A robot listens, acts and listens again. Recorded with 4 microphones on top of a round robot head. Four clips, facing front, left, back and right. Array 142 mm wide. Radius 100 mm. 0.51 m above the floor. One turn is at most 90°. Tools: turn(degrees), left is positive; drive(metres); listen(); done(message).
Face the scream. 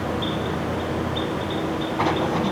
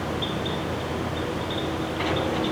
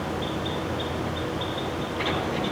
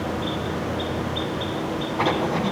listen()
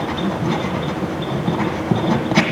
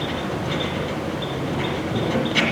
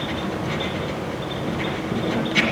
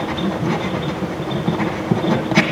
listen()
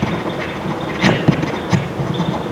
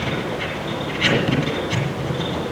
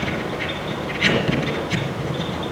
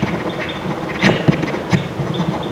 done("I can't make out a scream, only writing.")